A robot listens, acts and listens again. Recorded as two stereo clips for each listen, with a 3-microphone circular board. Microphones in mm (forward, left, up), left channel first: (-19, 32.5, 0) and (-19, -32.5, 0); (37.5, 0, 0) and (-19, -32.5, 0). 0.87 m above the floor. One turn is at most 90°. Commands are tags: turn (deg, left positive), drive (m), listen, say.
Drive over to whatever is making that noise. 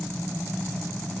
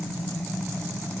<listen/>
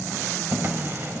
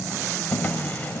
<turn deg="-35"/>
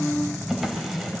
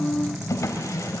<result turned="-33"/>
<drive m="1.0"/>
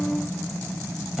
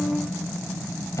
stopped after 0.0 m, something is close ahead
<listen/>
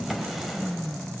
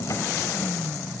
<say>Something is in my way. I am facing the drawer but have not reached it.</say>